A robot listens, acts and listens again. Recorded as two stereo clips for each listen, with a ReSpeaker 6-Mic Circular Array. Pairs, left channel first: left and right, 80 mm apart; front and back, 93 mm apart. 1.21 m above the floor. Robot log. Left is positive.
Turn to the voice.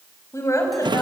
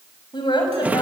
note: The woman speaking: 35° left.
cmd yaw +35
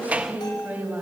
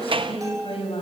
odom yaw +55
note: The woman speaking is now 20° right.
cmd yaw -20
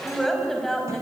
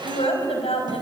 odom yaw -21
end: Found it: a woman speaking, straight ahead, over 4 m away.